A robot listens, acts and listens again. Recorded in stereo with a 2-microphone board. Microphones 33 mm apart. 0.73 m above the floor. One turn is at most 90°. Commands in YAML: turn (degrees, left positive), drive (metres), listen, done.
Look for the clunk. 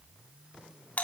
listen: true
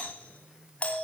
listen: true
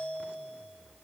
done: "I can't make out a clunk, only a doorbell."